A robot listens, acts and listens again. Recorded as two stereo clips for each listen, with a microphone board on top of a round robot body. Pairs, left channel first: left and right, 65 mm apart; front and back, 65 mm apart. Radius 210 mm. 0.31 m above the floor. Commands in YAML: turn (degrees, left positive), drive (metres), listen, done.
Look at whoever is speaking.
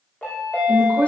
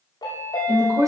turn: 160
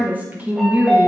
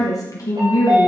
turn: -30
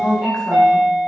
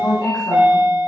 done: "Found it: a woman speaking, straight ahead, over 4 m away."